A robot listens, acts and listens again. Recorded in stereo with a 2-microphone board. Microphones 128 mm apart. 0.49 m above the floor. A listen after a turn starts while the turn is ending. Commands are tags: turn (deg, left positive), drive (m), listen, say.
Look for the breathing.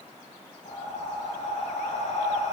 <turn deg="60"/>
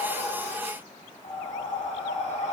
<turn deg="60"/>
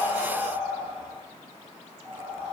<turn deg="-15"/>
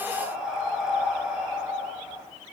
<say>Facing the breathing, 1 to 2 m away.</say>